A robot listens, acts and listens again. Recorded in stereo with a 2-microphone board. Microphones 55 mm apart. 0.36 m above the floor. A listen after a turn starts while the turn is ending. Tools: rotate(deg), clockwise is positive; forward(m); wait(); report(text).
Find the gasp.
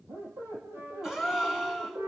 rotate(30)
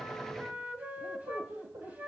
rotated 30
wait()
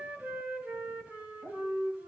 report("I heard a gasp, but can't make it out now. It was about 20° left or 140° right.")